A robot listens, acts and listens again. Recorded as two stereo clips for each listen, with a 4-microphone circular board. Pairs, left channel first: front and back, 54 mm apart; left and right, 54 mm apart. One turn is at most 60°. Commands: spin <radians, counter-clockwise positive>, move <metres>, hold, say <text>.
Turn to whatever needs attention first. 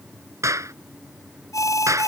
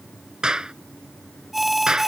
say Facing the alarm.